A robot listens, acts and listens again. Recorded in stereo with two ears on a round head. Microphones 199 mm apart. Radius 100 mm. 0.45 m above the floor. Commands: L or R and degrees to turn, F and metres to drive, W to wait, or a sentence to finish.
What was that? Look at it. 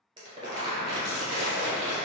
R20
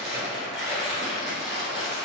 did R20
Found it: crumpling, straight ahead.